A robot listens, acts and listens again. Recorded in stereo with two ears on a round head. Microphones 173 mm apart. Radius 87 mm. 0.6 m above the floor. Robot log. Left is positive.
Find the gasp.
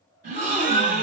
note: The gasp: about 40° right or 140° right.
cmd yaw -40
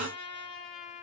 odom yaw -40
end: Facing the gasp, 2 to 4 m away.